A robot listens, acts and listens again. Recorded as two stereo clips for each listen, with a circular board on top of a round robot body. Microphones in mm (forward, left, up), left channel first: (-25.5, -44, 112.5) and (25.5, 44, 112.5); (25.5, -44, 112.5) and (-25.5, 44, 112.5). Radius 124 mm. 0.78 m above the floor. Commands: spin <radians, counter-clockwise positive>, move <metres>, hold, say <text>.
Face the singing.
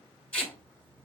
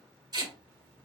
hold
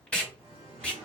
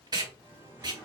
spin 0.96
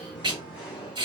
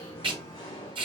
spin -0.35
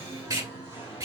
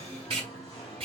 say Found it: singing, straight ahead, 2 to 4 m away.